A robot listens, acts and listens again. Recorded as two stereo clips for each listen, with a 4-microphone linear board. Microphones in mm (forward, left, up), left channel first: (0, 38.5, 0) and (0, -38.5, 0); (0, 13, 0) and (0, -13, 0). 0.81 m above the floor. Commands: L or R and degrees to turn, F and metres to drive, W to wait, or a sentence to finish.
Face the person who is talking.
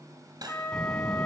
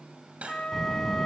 L30
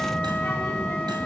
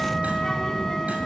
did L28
L145
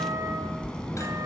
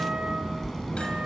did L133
L15
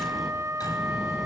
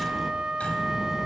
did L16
Found it: a child speaking, straight ahead.